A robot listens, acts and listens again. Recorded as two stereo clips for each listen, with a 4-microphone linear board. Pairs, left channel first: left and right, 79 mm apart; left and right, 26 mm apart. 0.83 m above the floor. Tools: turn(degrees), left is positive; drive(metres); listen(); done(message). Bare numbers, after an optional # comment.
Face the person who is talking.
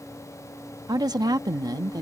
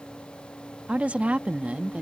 # The woman speaking: about 50° right or 130° right.
turn(-50)
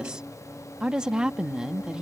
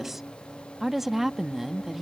# So it is at 10° right.
turn(-10)
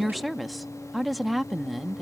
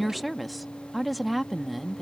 done("Facing the woman speaking.")